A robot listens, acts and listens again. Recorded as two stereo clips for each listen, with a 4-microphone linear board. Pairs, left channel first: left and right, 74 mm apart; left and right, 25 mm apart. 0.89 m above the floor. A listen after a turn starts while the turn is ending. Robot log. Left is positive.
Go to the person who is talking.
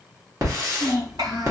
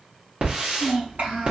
cmd yaw -90
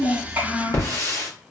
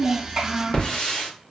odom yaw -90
note: So it is at 10° right.
cmd yaw -10
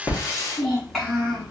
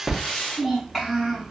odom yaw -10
cmd fwd 1.0
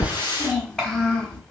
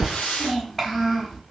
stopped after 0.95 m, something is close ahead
note: The child speaking is now 10° left.
cmd yaw +10
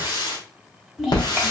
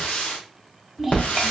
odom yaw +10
end: I am next to the child speaking.